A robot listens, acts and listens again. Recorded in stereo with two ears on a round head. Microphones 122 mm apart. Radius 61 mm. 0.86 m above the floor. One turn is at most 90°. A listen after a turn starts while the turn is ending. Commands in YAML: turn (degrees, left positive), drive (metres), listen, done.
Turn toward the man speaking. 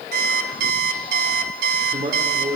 turn: -30
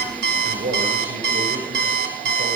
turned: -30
turn: -90
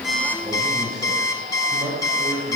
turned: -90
turn: -25
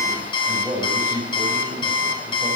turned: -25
turn: -15
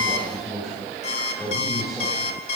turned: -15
done: "Found it: a man speaking, straight ahead, over 4 m away."